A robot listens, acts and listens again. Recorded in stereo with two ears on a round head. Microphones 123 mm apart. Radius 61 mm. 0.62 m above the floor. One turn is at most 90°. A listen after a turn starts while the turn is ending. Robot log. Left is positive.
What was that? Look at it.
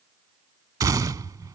note: The gunshot: about 25° right or 155° right.
cmd yaw -25
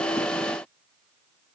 cmd idle
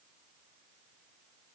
end: I heard a gunshot, but can't make it out now. It was about straight ahead or 130° right.